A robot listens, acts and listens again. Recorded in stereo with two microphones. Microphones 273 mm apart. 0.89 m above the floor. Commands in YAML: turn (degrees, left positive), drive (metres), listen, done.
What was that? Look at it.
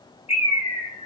turn: 60
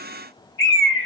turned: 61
turn: 50
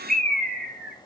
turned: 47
done: "Found it: a bird, straight ahead, 1 to 2 m away."